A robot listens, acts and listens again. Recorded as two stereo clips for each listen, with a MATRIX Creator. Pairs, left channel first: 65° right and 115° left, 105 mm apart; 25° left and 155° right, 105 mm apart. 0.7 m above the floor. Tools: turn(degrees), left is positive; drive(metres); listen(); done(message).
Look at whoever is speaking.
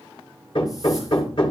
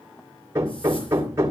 listen()
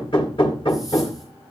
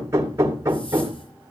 listen()
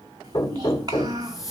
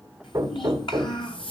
turn(degrees=60)
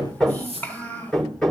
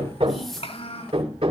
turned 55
done("Found it: a child speaking, straight ahead, over 4 m away.")